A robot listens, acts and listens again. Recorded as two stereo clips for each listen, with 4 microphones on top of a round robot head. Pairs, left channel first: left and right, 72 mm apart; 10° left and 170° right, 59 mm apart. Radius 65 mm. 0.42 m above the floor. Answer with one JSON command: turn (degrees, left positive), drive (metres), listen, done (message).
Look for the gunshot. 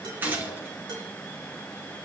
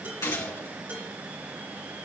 {"turn": -30}
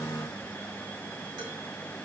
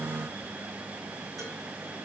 {"done": "Facing where the gunshot came from. I can't hear it now."}